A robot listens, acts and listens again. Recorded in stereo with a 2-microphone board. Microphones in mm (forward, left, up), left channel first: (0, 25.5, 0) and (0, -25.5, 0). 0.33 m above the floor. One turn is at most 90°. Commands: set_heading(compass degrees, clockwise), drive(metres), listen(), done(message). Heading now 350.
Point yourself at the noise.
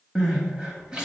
set_heading(5)
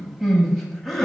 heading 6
done("Facing the crying, under 1 m away.")